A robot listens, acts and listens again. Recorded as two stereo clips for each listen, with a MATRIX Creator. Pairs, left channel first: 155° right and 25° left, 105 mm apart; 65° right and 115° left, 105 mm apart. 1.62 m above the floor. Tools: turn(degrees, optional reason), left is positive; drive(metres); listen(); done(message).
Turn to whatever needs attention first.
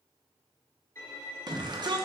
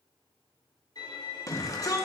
turn(degrees=-15, reason="The shout: 15° right.")
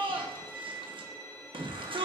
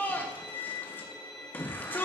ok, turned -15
done("Found it: a shout, straight ahead, 1 to 2 m away.")